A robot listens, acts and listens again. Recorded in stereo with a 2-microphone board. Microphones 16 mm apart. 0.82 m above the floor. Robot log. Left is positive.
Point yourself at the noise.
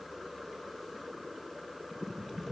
cmd idle
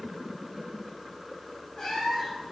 note: The cat meowing: about 30° left or 150° left.
cmd yaw +30
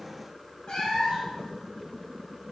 note: So it is at 115° left.
cmd yaw +115
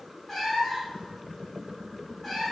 note: The cat meowing is now 15° left.
cmd yaw +15
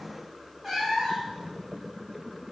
end: Facing the cat meowing, 2 to 4 m away.